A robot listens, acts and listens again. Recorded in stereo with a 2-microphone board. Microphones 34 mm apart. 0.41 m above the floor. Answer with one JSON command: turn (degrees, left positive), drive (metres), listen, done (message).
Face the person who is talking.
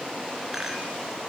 {"listen": true}
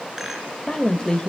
{"turn": 30}
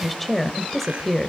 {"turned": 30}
{"turn": 10}
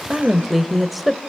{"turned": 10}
{"done": "Facing the woman speaking, 1 to 2 m away."}